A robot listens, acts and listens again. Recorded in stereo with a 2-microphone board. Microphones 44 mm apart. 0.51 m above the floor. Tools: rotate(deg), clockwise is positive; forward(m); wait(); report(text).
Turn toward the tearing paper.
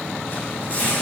rotate(-45)
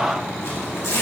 rotate(-85)
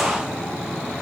wait()
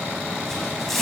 report("Facing the tearing paper.")